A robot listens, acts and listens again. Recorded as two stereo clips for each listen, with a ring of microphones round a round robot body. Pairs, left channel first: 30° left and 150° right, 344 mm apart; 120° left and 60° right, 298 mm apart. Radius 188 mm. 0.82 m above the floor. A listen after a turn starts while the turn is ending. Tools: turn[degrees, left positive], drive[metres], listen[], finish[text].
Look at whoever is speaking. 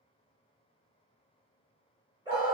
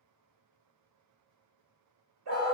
Action: listen[]
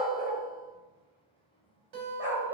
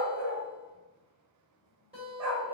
Action: listen[]
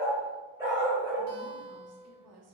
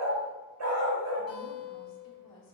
Thought: The woman speaking: 170° left.
Action: turn[170]
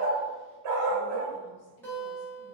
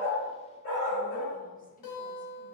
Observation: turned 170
Action: listen[]
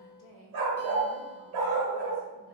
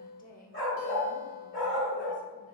Thought: The woman speaking is now 55° left.
Action: turn[55]
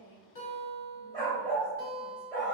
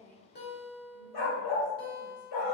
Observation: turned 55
Action: listen[]
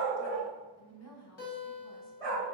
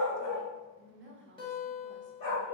Thought: The woman speaking is now 10° right.
Action: turn[-10]
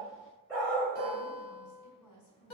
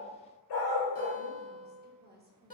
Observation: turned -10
Action: finish[Facing the woman speaking, 1 to 2 m away.]